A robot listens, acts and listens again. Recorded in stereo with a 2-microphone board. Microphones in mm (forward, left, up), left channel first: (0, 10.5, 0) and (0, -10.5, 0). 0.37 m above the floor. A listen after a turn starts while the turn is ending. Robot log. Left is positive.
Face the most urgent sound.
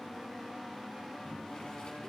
cmd idle
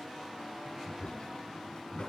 cmd idle
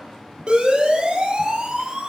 note: The siren: about 55° right or 125° right.
cmd yaw -55
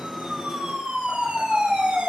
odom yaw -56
note: So it is at 70° right.
cmd yaw -70
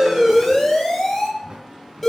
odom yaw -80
note: The siren is now 10° left.
cmd yaw +10
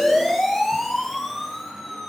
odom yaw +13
end: Found it: a siren, straight ahead.